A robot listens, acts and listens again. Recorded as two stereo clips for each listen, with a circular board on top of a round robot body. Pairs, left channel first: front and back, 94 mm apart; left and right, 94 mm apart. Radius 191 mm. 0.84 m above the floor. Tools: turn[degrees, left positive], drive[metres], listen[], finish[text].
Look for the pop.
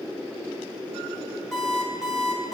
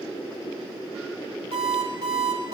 Action: listen[]
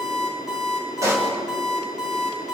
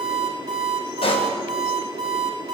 Thought: The pop: 120° left.
Action: turn[120]
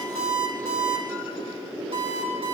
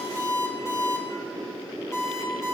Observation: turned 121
Action: finish[I heard a pop from this way, but can't make it out now.]